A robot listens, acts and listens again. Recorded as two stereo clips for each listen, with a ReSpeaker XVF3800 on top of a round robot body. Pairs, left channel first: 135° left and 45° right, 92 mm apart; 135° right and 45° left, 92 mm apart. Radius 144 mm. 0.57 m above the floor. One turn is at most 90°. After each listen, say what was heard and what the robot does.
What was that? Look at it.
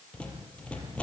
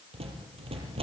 The rattle: 55° left. Turn 55° left.
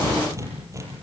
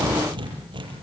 The rattle is now 10° left. Turn 10° left.
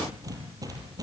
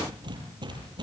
Facing the rattle, over 4 m away.